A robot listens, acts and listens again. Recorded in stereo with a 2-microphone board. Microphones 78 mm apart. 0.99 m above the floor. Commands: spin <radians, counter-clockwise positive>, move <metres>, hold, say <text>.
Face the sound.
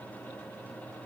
hold
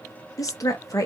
spin 0.87
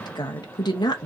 spin 1.40
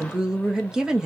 spin -0.17
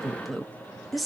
say Found it: a woman speaking, straight ahead, under 1 m away.